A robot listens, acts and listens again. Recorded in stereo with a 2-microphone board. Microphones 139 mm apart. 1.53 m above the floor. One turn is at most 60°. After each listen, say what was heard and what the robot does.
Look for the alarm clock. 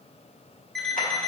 Turn 30° left.
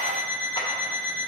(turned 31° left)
So it is at 25° right. Turn 25° right.
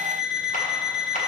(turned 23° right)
Facing the alarm clock, 1 to 2 m away.